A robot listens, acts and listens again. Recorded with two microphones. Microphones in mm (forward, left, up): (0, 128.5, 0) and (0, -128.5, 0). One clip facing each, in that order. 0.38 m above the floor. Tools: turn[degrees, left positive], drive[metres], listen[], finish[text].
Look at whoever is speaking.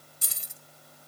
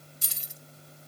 Action: listen[]
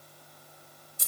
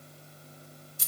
Action: listen[]
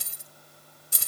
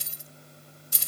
Action: finish[I can't make out anyone speaking to turn to.]